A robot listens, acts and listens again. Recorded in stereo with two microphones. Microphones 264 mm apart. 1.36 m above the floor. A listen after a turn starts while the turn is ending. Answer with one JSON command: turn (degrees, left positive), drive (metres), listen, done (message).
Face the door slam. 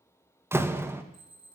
{"turn": -30}
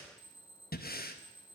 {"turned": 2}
{"listen": true}
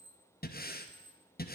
{"done": "I heard a door slam, but can't make it out now. It was about 10° right or 175° right."}